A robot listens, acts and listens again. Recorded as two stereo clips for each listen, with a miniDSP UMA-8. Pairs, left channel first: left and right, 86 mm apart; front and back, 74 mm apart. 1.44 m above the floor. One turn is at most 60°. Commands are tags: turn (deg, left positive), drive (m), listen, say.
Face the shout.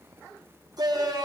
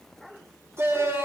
<turn deg="-60"/>
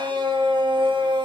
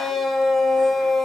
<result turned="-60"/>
<turn deg="-60"/>
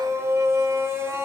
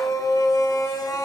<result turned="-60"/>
<turn deg="-35"/>
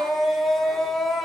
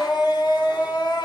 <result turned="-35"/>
<say>Found it: a shout, straight ahead, over 4 m away.</say>